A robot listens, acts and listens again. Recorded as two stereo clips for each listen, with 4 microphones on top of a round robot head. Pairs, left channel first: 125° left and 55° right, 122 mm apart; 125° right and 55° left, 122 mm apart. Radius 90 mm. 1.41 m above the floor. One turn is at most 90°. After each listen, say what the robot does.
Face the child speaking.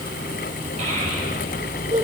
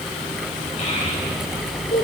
Turn 90° right.
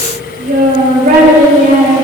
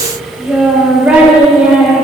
Turn 30° right.
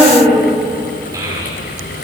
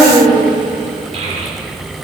Turn 10° left.
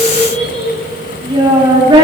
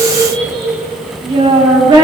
Found it: a child speaking, straight ahead.